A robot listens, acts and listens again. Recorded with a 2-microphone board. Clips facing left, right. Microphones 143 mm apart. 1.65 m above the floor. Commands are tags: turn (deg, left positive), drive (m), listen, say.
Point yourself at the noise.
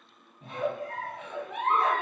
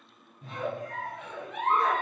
<turn deg="60"/>
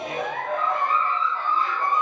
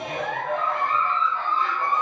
<turn deg="10"/>
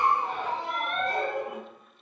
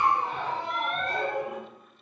<say>Found it: a giggle, straight ahead, 1 to 2 m away.</say>